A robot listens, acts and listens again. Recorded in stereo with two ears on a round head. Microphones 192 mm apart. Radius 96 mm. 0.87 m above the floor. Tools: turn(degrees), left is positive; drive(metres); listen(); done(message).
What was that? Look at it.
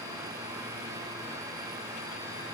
listen()
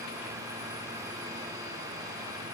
listen()
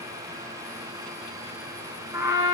turn(degrees=-30)
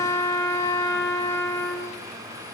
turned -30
turn(degrees=15)
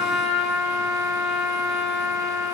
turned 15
done("Facing the trumpet.")